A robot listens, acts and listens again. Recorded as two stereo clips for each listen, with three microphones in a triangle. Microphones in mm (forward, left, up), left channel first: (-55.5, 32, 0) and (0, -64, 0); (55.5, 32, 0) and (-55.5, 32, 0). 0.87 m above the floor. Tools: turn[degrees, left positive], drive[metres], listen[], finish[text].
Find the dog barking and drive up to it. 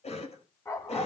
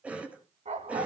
Thought: The dog barking: 175° right.
Action: turn[-175]
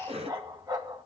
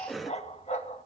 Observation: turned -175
Action: drive[1.0]
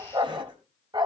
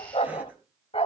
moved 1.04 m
Thought: The dog barking is now 20° right.
Action: turn[-20]
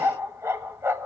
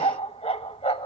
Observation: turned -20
Action: drive[1.0]
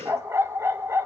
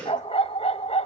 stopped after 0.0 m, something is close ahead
Action: finish[I am next to the dog barking.]